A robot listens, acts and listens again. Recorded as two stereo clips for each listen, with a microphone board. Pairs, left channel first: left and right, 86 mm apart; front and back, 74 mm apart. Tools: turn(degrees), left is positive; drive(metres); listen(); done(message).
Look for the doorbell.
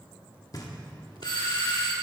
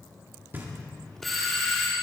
turn(degrees=90)
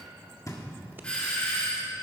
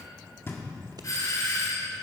turn(degrees=15)
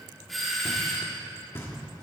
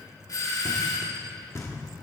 done("Facing the doorbell.")